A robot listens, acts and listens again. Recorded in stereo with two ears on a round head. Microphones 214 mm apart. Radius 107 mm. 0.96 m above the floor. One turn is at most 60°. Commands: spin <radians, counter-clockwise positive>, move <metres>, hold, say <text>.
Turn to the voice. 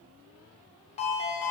hold
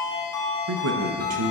spin -1.05
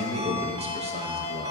spin -0.52
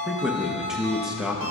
say Facing the man speaking.